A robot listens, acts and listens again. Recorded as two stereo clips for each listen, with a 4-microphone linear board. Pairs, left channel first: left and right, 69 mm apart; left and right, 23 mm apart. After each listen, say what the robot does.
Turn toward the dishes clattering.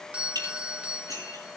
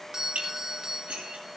Turn 90° right.
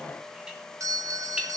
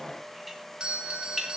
Keep listening.
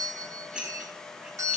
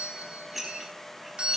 Turn 10° right.
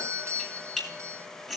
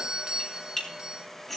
Found it: dishes clattering, straight ahead, over 4 m away.